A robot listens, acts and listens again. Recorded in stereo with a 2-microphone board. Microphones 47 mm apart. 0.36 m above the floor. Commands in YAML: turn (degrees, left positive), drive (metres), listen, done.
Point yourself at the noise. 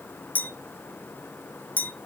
turn: 45
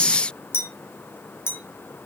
turn: 85
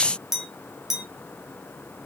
turn: -10
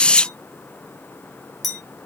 done: "Found it: a clink, straight ahead, 1 to 2 m away."